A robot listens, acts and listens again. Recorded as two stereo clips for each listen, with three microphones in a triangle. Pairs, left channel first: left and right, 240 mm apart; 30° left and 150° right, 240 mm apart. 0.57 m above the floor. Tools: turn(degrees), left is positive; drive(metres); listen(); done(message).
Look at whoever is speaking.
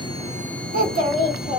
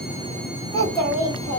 turn(degrees=100)
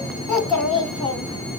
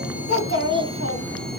done("Found it: a child speaking, straight ahead.")